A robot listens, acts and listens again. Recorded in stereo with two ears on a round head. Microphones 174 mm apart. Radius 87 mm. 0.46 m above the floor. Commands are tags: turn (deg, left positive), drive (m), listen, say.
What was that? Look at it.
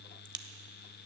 <turn deg="-25"/>
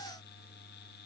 <listen/>
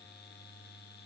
<say>I heard a crack, but can't make it out now. It was about straight ahead or 130° right.</say>